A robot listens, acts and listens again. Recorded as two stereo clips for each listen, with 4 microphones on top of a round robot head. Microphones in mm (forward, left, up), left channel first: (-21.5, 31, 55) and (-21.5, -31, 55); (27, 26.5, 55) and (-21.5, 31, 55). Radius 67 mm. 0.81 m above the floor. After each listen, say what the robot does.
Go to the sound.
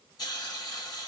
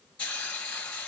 Turn 60° left.
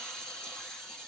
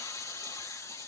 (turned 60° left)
Drive 1.0 m forward.
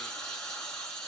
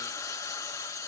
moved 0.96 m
Turn 10° left.
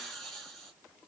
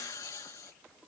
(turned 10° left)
Drive 1.0 m forward.
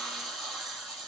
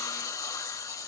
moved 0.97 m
Drive 1.0 m forward.
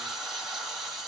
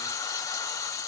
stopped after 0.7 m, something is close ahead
I am next to the hiss.